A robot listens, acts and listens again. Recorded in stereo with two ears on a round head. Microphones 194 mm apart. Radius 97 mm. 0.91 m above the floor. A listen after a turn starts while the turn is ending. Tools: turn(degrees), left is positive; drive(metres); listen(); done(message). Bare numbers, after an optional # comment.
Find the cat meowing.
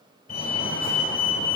listen()
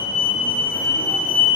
listen()
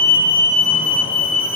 done("I can't make out a cat meowing to turn to.")